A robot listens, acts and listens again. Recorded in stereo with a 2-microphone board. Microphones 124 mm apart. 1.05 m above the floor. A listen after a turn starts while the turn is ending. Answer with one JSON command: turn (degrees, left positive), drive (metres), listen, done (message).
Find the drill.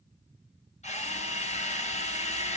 {"turn": 70}
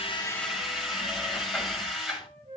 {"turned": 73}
{"done": "Found it: a drill, straight ahead."}